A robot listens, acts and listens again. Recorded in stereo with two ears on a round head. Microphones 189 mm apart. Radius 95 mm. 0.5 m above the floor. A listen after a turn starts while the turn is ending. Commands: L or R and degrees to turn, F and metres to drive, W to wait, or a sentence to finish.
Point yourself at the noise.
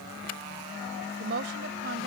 R55
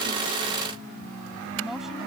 Facing the woman speaking.